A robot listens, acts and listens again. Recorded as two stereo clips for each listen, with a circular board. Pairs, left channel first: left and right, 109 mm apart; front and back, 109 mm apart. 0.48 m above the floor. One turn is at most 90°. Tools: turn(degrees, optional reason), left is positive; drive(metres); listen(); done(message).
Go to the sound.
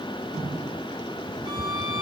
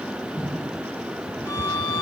turn(degrees=-60, reason="The violin: 60° right.")
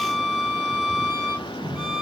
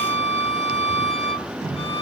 turn(degrees=-15, reason="The violin is now 15° right.")
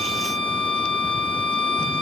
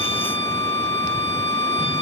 drive(metres=1.0)
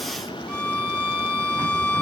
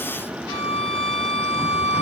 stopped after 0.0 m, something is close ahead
done("Something is in my way. I am facing the violin but have not reached it.")